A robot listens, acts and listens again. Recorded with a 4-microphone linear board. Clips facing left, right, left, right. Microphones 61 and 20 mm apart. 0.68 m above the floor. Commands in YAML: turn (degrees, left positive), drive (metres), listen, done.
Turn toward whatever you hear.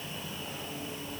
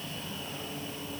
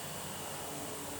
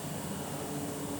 listen: true
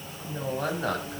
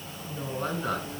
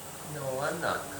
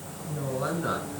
turn: 55
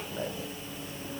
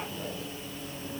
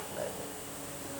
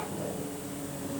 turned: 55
listen: true
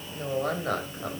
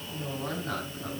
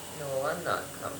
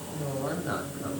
turn: 55
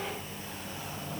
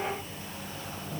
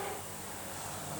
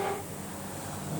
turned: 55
listen: true
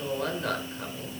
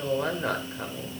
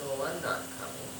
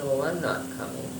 turn: -15
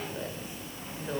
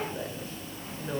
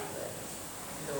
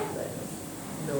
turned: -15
done: "Facing the woman speaking."